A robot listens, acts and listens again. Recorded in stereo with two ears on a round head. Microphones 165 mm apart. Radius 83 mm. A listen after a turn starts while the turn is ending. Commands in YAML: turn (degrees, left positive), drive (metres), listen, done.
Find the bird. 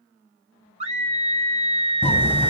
turn: 30
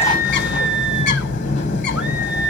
turn: 135
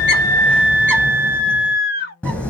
turn: 10
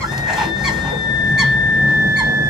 done: "Found it: a bird, straight ahead."